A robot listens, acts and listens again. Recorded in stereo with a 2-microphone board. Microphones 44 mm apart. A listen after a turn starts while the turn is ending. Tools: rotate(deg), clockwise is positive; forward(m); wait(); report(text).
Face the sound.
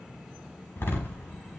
rotate(-60)
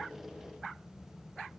wait()
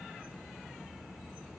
report("I heard a door slam, but can't make it out now. It was about straight ahead or 60° left.")